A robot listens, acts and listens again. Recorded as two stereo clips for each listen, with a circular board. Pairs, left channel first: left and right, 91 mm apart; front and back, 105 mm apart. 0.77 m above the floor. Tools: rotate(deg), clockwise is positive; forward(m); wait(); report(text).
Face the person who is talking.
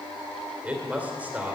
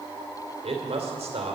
rotate(165)
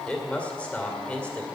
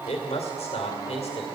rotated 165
rotate(-15)
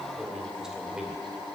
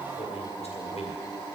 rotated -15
report("Found it: a man speaking, straight ahead, 2 to 4 m away.")